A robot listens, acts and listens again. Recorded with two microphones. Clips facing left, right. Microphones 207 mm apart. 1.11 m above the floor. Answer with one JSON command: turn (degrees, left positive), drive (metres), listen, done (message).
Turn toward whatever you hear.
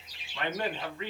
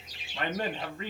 {"turn": -45}
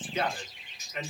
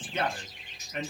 {"turn": -90}
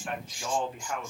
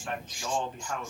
{"turn": 10}
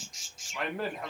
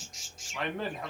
{"done": "Found it: a man speaking, straight ahead."}